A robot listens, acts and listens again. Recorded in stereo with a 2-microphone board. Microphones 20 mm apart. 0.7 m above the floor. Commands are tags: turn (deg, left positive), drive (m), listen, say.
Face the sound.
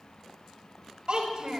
<turn deg="-40"/>
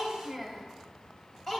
<turn deg="20"/>
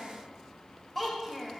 <turn deg="10"/>
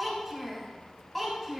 <turn deg="15"/>
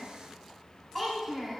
<say>Facing the child speaking, 2 to 4 m away.</say>